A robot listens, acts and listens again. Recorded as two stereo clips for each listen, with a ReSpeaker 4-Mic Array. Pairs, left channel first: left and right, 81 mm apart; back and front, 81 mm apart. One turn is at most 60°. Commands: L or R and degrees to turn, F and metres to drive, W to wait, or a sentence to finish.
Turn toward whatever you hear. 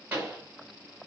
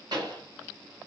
R25
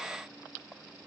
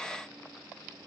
Facing where the pop came from. I can't hear it now.